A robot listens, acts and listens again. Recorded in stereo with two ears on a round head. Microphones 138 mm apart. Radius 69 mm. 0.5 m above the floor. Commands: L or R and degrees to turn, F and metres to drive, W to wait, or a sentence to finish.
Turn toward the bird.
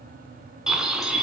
R30
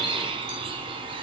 R145
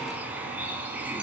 R10
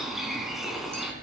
Facing the bird.